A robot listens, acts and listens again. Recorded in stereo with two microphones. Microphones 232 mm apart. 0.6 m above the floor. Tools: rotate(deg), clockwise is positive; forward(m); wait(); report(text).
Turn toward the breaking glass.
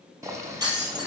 rotate(15)
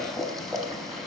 wait()
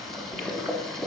report("I heard breaking glass, but can't make it out now. It was about straight ahead or 150° right.")